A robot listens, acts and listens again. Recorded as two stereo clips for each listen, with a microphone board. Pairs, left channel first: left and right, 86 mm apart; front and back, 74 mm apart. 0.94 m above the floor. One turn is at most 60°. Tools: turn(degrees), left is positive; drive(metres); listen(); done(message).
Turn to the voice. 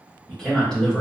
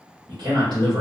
turn(degrees=60)
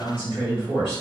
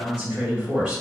turn(degrees=60)
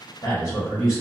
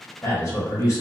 turn(degrees=50)
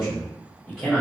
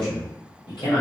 turn(degrees=10)
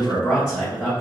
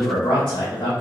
done("Found it: a man speaking, straight ahead, 1 to 2 m away.")